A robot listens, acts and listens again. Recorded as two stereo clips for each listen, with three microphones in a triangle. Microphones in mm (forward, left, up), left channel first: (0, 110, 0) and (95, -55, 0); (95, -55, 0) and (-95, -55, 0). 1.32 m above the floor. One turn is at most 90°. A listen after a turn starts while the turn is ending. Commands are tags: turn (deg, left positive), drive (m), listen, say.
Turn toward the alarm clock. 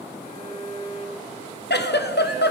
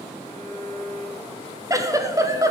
<listen/>
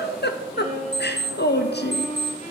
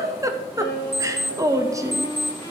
<turn deg="-90"/>
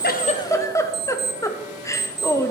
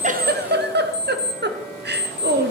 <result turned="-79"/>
<turn deg="-70"/>
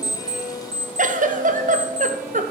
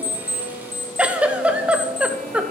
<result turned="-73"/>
<say>Facing the alarm clock.</say>